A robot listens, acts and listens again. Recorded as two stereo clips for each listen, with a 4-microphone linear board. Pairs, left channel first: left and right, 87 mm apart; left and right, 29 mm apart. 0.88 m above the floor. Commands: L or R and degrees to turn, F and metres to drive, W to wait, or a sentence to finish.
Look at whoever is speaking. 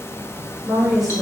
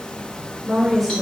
R30
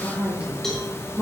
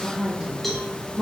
R30
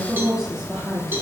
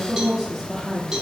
L30
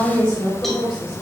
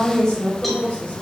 L135
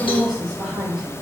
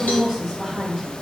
Facing the woman speaking, 1 to 2 m away.